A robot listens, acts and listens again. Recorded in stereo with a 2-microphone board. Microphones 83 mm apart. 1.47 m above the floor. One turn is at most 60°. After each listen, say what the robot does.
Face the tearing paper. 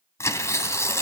Turn 35° left.
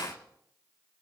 Keep listening.
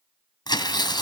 Turn 60° left.
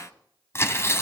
Turn 35° left.
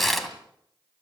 Facing the tearing paper.